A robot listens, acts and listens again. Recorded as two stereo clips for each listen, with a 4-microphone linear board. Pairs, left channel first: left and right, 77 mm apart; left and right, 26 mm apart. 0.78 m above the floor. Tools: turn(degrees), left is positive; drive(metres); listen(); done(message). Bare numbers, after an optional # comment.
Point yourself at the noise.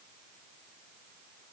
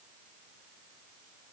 listen()
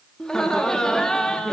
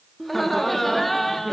turn(30)
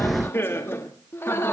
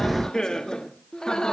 # So it is at 145° left.
turn(145)
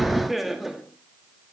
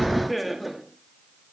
done("Facing the laughter.")